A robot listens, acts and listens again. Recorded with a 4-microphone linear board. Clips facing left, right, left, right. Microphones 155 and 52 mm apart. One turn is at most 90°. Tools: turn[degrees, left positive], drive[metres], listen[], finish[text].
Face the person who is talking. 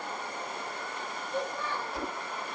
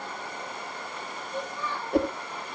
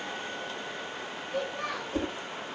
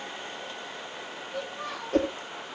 Thought: The child speaking: about 60° left or 120° left.
Action: turn[60]
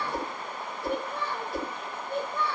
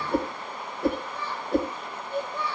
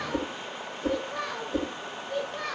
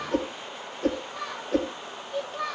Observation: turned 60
Thought: So it is at 50° left.
Action: turn[50]
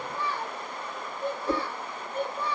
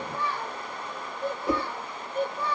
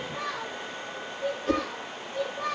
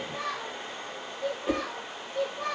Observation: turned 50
Action: finish[Facing the child speaking, over 4 m away.]